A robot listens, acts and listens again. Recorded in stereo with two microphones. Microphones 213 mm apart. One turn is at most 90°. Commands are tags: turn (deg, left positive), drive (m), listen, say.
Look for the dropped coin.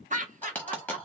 <turn deg="30"/>
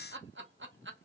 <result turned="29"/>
<listen/>
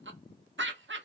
<say>I heard a dropped coin, but can't make it out now. It was about 20° right or 145° left.</say>